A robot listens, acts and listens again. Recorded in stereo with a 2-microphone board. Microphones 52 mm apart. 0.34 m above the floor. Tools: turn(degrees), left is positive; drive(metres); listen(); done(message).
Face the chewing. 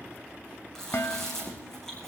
turn(degrees=30)
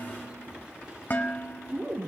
turn(degrees=-20)
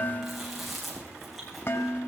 done("Found it: chewing, straight ahead.")